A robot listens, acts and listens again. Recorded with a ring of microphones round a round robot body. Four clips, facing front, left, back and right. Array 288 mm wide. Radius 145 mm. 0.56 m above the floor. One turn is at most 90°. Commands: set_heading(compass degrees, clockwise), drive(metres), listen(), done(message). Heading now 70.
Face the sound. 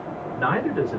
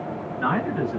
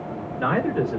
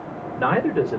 set_heading(160)
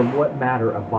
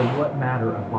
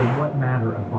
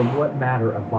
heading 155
set_heading(165)
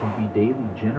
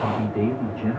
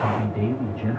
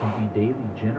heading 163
set_heading(173)
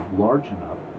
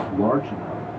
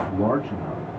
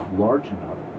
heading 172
set_heading(182)
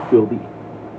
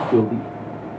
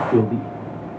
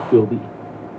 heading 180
set_heading(205)
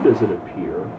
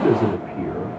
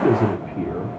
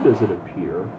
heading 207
set_heading(282)
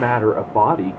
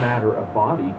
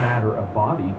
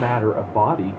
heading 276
done("Found it: a man speaking, straight ahead.")